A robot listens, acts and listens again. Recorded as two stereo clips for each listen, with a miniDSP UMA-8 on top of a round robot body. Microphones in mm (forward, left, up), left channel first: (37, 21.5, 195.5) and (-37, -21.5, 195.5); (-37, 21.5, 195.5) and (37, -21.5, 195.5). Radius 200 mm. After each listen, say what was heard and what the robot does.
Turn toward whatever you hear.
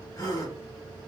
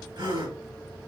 The gasp: 10° right. Turn 10° right.
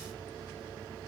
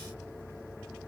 I heard a gasp from this way, but can't make it out now.